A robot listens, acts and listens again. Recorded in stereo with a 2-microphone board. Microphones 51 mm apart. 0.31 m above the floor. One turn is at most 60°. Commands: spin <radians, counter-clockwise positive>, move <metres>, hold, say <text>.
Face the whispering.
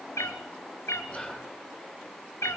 spin 0.44
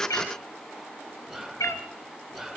say Facing the whispering.